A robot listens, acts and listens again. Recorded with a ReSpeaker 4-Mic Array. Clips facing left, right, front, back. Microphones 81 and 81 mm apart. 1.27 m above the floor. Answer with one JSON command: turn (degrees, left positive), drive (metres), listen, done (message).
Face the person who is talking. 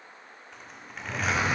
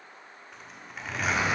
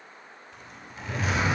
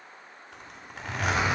{"listen": true}
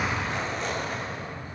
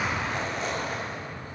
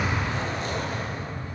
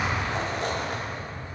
{"listen": true}
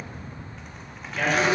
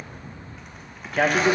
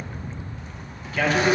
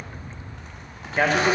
{"turn": -125}
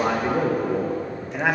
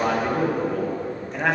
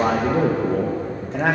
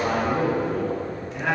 {"done": "Found it: a man speaking, straight ahead."}